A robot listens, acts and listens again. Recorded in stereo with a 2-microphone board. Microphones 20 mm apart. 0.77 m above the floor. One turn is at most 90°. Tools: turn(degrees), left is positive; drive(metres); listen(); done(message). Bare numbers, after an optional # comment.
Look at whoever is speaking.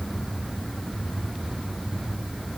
listen()
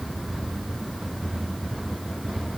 listen()
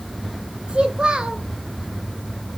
# The child speaking: about 60° right or 120° right.
turn(-60)
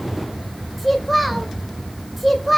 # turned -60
done("Facing the child speaking.")